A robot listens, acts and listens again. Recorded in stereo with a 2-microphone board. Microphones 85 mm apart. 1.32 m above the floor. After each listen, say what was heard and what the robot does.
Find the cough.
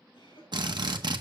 Turn 90° left.
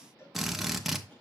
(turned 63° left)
Nothing new. It was at 25° left. Turn 25° left.
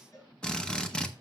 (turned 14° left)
Nothing new. It was at 15° left. Turn 15° left.
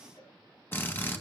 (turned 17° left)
I heard a cough from this way, but can't make it out now.